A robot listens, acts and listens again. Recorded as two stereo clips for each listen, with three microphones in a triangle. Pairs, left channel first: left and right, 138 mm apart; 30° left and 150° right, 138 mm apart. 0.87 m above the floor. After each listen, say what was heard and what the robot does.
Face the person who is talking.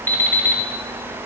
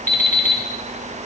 Keep listening.
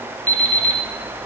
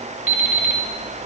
Keep listening.
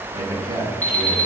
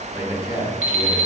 The man speaking: 25° right. Turn 25° right.
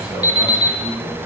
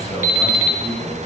Found it: a man speaking, straight ahead.